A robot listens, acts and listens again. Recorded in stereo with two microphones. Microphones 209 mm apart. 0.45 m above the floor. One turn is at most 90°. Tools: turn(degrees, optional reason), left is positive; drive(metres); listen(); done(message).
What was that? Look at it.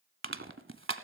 turn(degrees=-90)
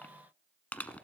done("Facing the crushing, under 1 m away.")